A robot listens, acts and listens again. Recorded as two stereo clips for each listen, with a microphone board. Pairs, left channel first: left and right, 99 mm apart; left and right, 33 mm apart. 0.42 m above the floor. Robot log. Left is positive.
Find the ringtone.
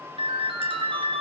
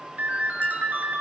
note: The ringtone: about 60° right or 120° right.
cmd yaw -60
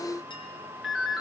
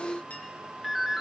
end: Facing the ringtone.